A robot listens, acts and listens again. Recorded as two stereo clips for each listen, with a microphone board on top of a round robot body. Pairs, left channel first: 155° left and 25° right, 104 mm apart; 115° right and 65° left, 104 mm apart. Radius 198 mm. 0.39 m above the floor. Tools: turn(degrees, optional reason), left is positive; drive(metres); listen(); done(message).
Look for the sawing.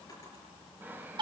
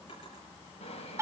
turn(degrees=-95, reason="The sawing: 95° right.")
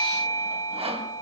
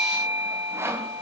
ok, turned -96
done("Found it: sawing, straight ahead, 2 to 4 m away.")